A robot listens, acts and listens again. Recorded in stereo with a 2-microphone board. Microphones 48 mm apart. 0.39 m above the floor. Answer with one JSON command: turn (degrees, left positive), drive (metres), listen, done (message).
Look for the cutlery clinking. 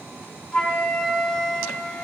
{"listen": true}
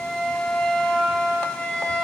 {"listen": true}
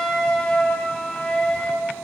{"done": "I can't make out cutlery clinking to turn to."}